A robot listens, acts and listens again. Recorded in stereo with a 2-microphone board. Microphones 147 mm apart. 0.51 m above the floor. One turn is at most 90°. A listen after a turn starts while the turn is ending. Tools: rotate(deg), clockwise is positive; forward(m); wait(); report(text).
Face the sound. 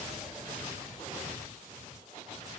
wait()
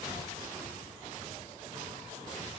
wait()
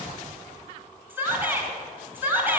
rotate(30)
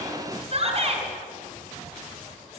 rotate(90)
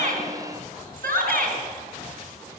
rotate(80)
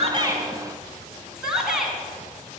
report("Found it: a shout, straight ahead, over 4 m away.")